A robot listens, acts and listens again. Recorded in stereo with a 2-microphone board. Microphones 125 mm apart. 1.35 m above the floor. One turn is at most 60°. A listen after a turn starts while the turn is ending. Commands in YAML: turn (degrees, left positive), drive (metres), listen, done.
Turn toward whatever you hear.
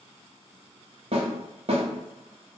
turn: -50
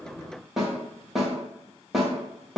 done: "Facing the snare drum, 1 to 2 m away."